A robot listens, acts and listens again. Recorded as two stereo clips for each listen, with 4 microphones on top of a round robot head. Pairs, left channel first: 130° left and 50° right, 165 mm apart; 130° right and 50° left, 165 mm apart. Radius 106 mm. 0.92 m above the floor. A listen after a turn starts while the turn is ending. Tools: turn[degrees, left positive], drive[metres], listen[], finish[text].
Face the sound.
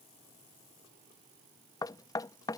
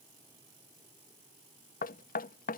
Thought: The knocking: 160° right.
Action: turn[-160]
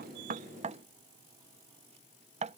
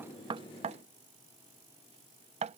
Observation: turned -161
Action: finish[Found it: knocking, straight ahead.]